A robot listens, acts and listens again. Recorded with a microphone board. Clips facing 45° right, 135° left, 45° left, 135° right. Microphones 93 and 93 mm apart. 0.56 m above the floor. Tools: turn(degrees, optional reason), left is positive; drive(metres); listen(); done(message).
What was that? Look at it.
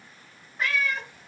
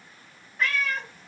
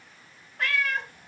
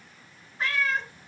turn(degrees=30, reason="The cat meowing: 30° left.")
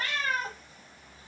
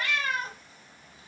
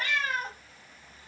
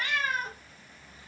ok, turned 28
done("Facing the cat meowing, 1 to 2 m away.")